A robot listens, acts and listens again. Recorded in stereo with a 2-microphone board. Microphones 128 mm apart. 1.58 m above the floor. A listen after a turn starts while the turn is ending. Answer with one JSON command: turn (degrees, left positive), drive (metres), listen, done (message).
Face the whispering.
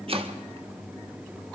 {"listen": true}
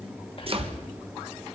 {"turn": 45}
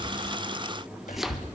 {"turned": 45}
{"turn": 90}
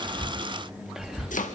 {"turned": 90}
{"done": "Found it: whispering, straight ahead, 2 to 4 m away."}